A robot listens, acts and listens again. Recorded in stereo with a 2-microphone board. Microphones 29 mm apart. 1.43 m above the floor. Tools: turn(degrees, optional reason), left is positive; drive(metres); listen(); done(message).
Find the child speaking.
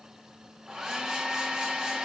listen()
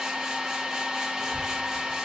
turn(degrees=55, reason="The child speaking: about 55° left or 125° left.")
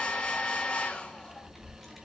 done("Facing the child speaking.")